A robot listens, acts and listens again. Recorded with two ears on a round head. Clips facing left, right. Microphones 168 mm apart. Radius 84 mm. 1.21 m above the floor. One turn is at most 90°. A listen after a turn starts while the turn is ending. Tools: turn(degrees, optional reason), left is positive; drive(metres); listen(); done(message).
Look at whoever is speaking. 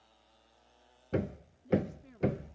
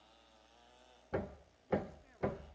turn(degrees=55, reason="The woman speaking: about 55° left or 125° left.")
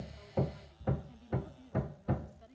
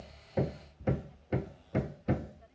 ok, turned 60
turn(degrees=45, reason="So it is at 45° left.")
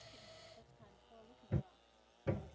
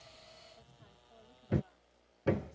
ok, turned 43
listen()
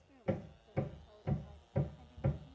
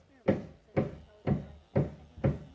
turn(degrees=-10, reason="The woman speaking is now 10° right.")
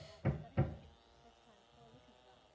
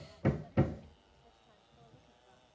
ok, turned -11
listen()
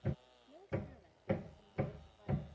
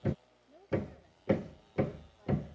done("Found it: a woman speaking, straight ahead.")